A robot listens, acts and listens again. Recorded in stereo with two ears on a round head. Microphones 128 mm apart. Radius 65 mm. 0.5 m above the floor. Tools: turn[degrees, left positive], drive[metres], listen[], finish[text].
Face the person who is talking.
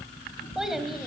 Action: turn[30]
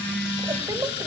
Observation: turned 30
Action: listen[]
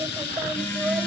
Action: turn[-30]
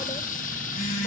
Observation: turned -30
Action: listen[]
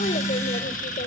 Action: listen[]
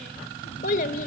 Thought: So it is at 60° left.
Action: turn[60]
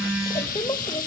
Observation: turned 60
Thought: The child speaking is now 25° left.
Action: turn[25]
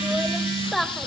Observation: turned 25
Action: finish[Facing the child speaking.]